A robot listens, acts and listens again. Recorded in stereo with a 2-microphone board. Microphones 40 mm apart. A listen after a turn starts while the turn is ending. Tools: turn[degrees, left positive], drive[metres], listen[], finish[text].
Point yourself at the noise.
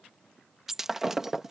Action: turn[-30]
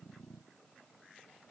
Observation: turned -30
Action: listen[]
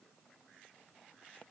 Action: finish[I heard breaking glass, but can't make it out now. It was about 20° left or 140° right.]